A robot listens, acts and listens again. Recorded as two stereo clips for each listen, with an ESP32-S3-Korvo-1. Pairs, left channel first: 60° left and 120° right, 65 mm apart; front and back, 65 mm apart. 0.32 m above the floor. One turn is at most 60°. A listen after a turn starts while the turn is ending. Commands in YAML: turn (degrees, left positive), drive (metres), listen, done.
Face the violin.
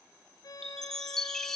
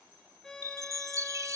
turn: 60
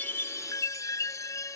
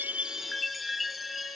turn: 20
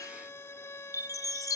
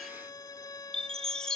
turn: 15
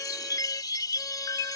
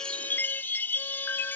listen: true
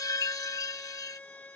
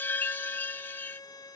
done: "Facing the violin."